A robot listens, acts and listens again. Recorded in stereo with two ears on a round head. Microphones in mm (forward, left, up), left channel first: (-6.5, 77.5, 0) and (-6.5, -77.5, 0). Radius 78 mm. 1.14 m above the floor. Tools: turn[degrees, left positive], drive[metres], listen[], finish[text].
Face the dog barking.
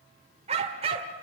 Thought: The dog barking: about 35° right or 145° right.
Action: turn[-35]
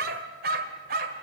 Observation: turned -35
Thought: So it is at 120° right.
Action: turn[-120]
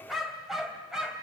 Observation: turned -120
Action: finish[Found it: a dog barking, straight ahead.]